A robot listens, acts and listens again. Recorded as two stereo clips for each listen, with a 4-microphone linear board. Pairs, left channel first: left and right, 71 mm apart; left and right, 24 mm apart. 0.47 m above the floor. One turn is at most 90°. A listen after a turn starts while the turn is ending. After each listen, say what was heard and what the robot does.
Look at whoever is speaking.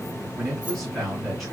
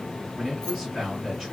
Turn 30° left.
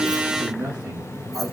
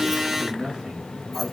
So it is at 30° right. Turn 30° right.
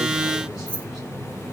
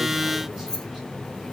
Keep listening.
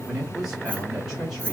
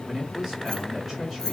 The man speaking is now 10° right. Turn 10° right.
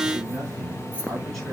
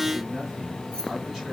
Keep listening.
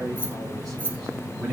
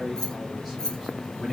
Keep listening.
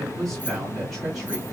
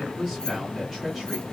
Facing the man speaking, 2 to 4 m away.